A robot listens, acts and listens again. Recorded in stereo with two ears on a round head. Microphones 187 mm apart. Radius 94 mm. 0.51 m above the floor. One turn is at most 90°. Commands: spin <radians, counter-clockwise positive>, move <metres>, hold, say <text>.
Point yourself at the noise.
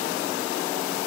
hold
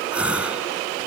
spin -0.52
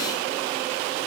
hold
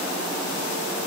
say I heard a gasp, but can't make it out now. It was about 25° left or 145° right.